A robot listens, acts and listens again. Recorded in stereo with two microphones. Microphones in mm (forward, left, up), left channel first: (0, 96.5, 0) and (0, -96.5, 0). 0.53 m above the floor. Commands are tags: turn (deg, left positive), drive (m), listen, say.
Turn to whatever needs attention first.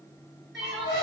<turn deg="30"/>
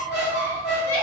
<turn deg="-35"/>
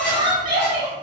<turn deg="-25"/>
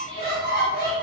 <listen/>
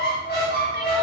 <listen/>
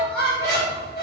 <say>I heard crying from this way, but can't make it out now.</say>